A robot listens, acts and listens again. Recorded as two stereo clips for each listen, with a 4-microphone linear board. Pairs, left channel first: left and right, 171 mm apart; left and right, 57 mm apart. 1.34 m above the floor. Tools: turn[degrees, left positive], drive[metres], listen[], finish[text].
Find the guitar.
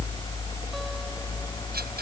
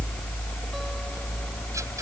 Action: listen[]
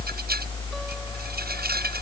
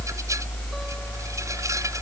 Action: listen[]
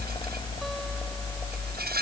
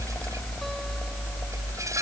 Action: finish[I can't make out a guitar.]